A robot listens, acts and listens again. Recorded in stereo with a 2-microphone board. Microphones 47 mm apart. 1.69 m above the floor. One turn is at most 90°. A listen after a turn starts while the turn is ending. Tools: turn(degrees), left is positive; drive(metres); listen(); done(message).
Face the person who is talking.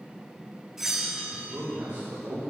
turn(degrees=-55)
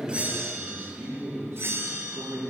turn(degrees=-70)
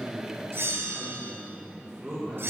turn(degrees=-15)
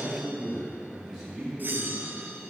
done("Facing the man speaking, 2 to 4 m away.")